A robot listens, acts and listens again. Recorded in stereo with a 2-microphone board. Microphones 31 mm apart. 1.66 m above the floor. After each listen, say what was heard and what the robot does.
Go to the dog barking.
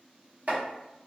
Keep listening.
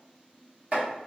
Keep listening.
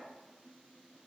I can't make out a dog barking to turn to.